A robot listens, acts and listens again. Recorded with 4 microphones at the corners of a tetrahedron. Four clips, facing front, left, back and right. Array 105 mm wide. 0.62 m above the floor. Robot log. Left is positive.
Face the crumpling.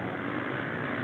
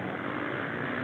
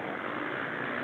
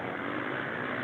cmd idle
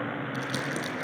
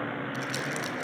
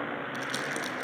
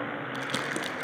note: The crumpling: 90° right.
cmd yaw -90
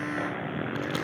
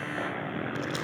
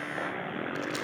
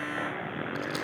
note: The crumpling is now 15° right.
cmd yaw -15
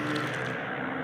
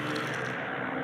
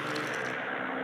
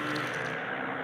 cmd idle
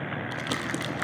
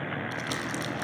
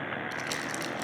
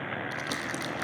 end: Found it: crumpling, straight ahead.